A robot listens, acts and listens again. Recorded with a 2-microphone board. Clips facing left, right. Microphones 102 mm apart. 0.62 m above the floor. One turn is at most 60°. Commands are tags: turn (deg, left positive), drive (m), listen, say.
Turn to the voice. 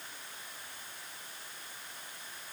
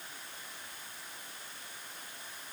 <listen/>
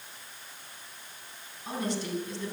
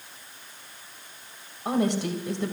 <turn deg="-60"/>
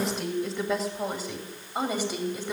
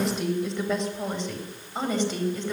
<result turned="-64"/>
<turn deg="10"/>
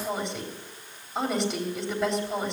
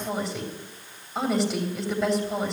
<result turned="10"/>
<say>Found it: a woman speaking, straight ahead.</say>